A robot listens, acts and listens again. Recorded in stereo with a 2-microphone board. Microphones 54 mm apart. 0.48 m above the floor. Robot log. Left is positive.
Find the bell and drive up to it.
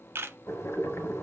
cmd idle
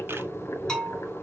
cmd yaw +30
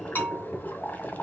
note: So it is at 135° left.
cmd yaw +135
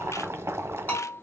note: The bell is now 45° left.
cmd yaw +45
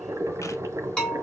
note: The bell is now 15° left.
cmd yaw +15
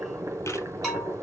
cmd fwd 1.0
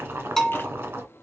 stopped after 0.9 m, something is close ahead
note: The bell is now 10° left.
cmd yaw +10
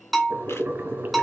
end: I am next to the bell.